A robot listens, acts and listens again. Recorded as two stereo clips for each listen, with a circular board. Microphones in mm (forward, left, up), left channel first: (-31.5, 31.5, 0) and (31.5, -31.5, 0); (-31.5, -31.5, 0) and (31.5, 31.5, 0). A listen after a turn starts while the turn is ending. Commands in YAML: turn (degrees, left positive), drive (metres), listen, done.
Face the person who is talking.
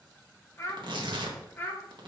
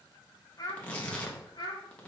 turn: -160
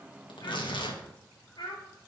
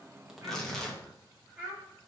turn: 110
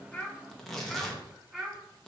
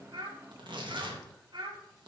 turn: 25
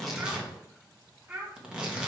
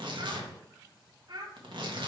turn: 10
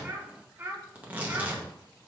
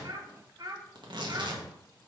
done: "Facing the child speaking, 2 to 4 m away."